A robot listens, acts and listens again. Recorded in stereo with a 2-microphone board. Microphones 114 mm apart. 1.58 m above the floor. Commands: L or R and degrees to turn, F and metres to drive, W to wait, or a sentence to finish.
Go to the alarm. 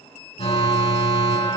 L60
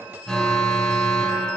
F1.0
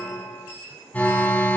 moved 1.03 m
L15
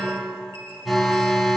F1.0
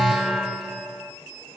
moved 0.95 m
F1.0
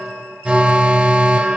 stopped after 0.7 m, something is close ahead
R10
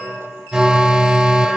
R10
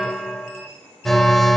I am next to the alarm.